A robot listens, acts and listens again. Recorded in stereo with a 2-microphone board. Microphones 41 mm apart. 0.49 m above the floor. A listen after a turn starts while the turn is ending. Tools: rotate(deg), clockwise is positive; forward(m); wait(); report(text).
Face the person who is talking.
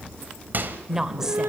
rotate(15)
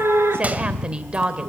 rotate(150)
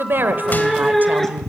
wait()
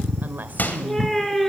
wait()
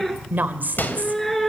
rotate(55)
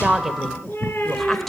report("Found it: a woman speaking, straight ahead.")